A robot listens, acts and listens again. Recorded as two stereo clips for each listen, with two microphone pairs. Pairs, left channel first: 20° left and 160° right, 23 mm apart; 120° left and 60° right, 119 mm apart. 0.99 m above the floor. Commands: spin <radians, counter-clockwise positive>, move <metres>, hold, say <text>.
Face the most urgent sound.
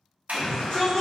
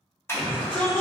spin 0.79
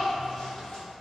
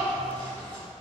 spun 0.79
hold
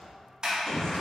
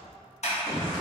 say Facing the shout.